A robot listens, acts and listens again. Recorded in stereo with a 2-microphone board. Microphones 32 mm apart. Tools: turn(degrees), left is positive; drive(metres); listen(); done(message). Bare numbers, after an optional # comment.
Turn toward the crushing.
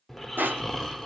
# The crushing: about 75° right or 105° right.
turn(-75)
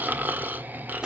# So it is at 25° right.
turn(-25)
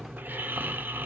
listen()
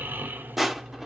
done("Found it: crushing, straight ahead, 1 to 2 m away.")